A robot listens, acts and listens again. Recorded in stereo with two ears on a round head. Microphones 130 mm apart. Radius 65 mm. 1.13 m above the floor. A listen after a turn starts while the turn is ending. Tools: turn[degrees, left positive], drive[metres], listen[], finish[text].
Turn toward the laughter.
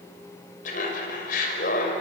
Thought: The laughter: about 65° left or 115° left.
Action: turn[65]
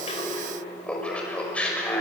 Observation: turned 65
Thought: So it is at 10° left.
Action: turn[10]
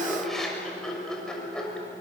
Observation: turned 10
Action: finish[Facing the laughter.]